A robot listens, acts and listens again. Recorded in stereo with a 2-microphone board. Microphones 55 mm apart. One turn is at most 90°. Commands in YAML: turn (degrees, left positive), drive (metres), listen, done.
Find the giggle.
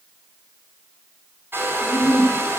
turn: 40
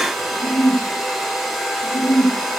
turn: 90
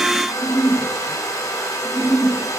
done: "Found it: a giggle, straight ahead."